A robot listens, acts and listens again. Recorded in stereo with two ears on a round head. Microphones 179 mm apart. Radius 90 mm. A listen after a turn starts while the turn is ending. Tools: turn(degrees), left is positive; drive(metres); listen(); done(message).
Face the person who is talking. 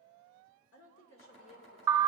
turn(degrees=70)
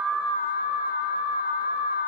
listen()
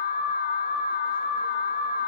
listen()
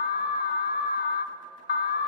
done("I heard a woman speaking, but can't make it out now. It was about straight ahead or 40° left.")